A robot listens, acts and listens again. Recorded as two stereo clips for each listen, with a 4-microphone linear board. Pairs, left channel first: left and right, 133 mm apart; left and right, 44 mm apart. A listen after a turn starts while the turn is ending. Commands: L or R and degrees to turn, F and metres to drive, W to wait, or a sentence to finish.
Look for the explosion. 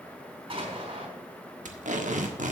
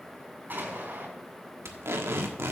R45
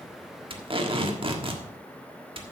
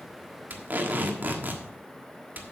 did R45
W
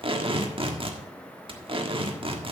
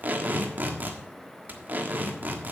I heard an explosion, but can't make it out now. It was about straight ahead or 90° right.